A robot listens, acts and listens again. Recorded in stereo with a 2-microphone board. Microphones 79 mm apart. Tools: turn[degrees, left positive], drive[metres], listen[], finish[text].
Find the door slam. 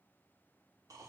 Action: listen[]
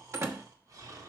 Thought: The door slam: about 35° right or 145° right.
Action: turn[-35]
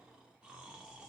Action: listen[]
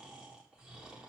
Action: finish[I heard a door slam, but can't make it out now. It was about straight ahead or 110° right.]